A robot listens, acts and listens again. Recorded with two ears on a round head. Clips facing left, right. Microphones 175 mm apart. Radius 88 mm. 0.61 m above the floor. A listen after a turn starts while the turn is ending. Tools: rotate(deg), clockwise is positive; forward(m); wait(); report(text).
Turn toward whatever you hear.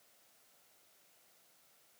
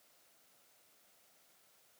wait()
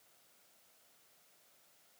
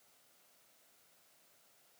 wait()
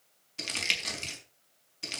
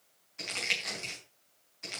rotate(-40)
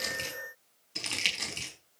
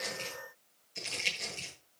rotate(-100)
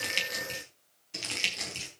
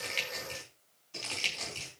rotate(-25)
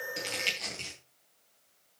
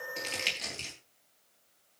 rotate(15)
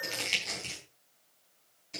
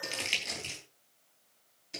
report("Facing the crumpling, over 4 m away.")